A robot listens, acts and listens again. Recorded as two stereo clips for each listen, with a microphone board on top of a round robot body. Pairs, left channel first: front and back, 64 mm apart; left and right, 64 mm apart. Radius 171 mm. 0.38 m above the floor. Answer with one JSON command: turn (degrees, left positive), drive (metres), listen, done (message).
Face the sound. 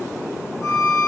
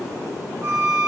{"turn": -40}
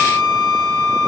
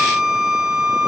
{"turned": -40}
{"done": "Facing the violin, 2 to 4 m away."}